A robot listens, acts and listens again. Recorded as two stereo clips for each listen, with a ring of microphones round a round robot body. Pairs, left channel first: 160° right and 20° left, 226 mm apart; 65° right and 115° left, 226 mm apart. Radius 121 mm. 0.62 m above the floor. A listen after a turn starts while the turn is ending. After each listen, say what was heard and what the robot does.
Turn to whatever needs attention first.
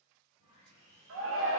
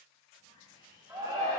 The shout: 40° left. Turn 40° left.
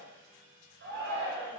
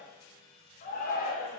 The shout is now 15° right. Turn 15° right.
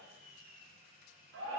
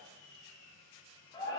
Facing the shout.